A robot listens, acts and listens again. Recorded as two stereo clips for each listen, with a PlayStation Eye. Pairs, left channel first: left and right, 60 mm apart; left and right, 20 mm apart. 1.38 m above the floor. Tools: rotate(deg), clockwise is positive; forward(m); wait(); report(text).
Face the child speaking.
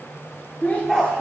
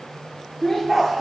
rotate(-30)
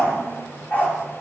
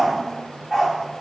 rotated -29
wait()
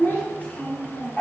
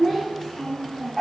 rotate(-25)
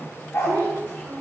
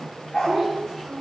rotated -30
rotate(-45)
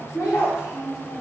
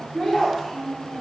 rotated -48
rotate(-85)
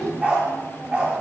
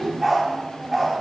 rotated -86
rotate(-10)
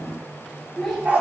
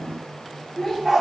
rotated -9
report("Facing the child speaking, over 4 m away.")